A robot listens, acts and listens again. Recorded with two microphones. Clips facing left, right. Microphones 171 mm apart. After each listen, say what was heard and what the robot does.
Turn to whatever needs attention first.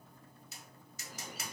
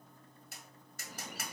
Keep listening.
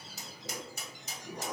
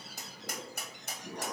Keep listening.
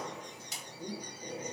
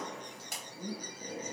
I can't make out anything urgent to turn to.